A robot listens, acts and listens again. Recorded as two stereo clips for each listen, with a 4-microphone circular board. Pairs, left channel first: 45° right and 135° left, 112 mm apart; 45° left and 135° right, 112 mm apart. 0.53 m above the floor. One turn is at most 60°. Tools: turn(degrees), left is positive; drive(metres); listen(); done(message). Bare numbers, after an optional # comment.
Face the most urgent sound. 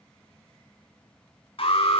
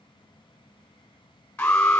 # The alarm: 35° right.
turn(-35)
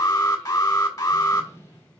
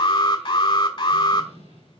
done("Facing the alarm.")